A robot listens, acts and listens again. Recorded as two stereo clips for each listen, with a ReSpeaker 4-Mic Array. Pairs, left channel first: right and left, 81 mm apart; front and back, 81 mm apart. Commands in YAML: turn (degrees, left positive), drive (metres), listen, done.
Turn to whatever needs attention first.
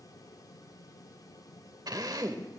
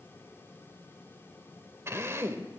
listen: true
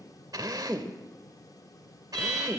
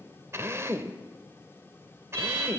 turn: -175
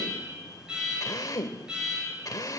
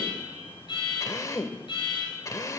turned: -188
turn: 10
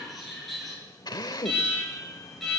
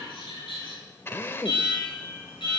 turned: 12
done: "Found it: an alarm, straight ahead, over 4 m away."